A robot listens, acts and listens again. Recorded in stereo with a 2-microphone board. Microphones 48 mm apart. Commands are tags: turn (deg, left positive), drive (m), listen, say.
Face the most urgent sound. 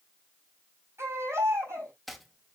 <turn deg="-65"/>
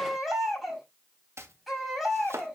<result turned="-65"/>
<say>Found it: a baby crying, straight ahead, over 4 m away.</say>